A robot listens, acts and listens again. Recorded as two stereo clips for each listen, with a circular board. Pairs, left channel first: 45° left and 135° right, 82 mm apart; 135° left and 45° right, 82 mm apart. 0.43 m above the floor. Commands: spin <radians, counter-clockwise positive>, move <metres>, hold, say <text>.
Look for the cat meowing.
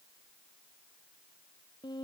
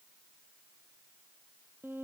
hold
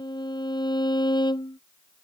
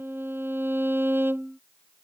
hold
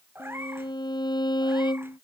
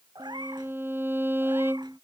spin -1.31
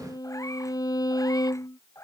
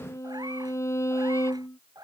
spin -0.17
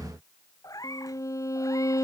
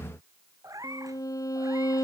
say Found it: a cat meowing, straight ahead.